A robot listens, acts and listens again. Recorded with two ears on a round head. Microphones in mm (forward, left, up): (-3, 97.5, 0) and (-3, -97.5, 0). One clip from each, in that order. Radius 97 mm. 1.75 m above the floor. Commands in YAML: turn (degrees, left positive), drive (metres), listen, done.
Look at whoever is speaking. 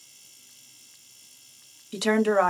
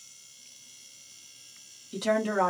turn: 45
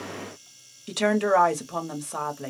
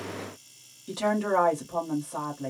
turn: 85
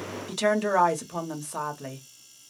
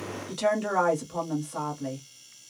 turn: 30
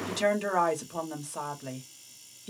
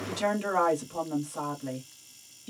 turn: 15
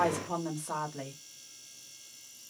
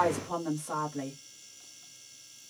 done: "Found it: a woman speaking, straight ahead, under 1 m away."